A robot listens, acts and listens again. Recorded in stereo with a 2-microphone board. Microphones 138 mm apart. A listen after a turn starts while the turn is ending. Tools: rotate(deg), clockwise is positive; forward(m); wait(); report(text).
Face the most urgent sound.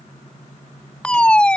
rotate(-30)
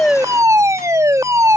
rotate(20)
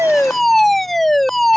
report("Facing the fire alarm.")